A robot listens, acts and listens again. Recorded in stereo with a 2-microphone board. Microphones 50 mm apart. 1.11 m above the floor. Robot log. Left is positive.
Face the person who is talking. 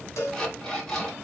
cmd idle
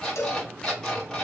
cmd idle
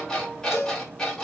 end: I can't make out anyone speaking to turn to.